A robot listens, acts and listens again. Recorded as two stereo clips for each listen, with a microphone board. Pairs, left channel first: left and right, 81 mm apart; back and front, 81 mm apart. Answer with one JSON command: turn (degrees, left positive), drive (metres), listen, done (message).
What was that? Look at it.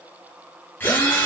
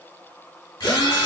{"turn": 155}
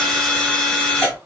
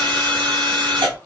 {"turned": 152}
{"done": "Facing the drill."}